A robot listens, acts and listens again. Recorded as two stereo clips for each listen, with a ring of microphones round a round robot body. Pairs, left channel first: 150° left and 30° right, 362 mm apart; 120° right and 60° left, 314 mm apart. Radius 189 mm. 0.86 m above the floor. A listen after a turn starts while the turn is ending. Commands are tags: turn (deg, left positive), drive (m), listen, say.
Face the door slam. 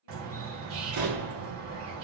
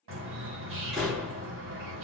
<turn deg="-30"/>
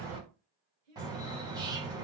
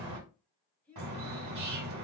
<say>I heard a door slam from this way, but can't make it out now.</say>